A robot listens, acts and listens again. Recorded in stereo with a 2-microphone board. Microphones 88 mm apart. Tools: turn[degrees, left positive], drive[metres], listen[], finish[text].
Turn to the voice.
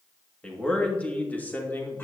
Thought: The man speaking: about 25° left or 155° left.
Action: turn[25]
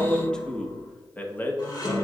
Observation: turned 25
Thought: The man speaking: about 25° left or 155° left.
Action: turn[25]
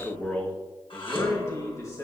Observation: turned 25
Thought: The man speaking: about 40° left or 140° left.
Action: turn[40]
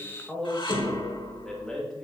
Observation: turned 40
Thought: So it is at 10° left.
Action: turn[10]
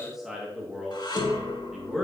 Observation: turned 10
Action: finish[Facing the man speaking.]